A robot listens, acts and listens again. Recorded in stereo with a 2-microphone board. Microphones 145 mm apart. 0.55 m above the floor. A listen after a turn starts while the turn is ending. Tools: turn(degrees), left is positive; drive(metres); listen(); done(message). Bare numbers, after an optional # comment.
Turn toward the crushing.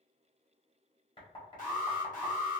listen()
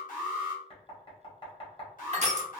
# The crushing: about 45° right or 135° right.
turn(-45)
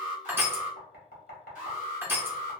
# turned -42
# So it is at 15° right.
turn(-15)
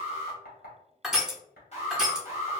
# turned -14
done("Facing the crushing.")